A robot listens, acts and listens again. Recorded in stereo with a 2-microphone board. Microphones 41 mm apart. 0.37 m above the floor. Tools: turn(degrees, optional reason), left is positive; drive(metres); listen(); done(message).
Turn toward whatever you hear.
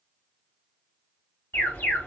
turn(degrees=70, reason="The alarm: about 70° left or 110° left.")
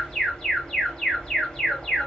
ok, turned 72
turn(degrees=15, reason="So it is at 15° left.")
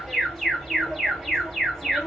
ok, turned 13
done("Found it: an alarm, straight ahead, 1 to 2 m away.")